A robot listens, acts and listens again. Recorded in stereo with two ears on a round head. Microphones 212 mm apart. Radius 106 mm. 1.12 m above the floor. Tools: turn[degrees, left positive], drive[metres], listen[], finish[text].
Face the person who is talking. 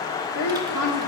Action: turn[90]
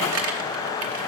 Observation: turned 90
Action: listen[]
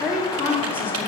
Action: finish[Facing the woman speaking, 2 to 4 m away.]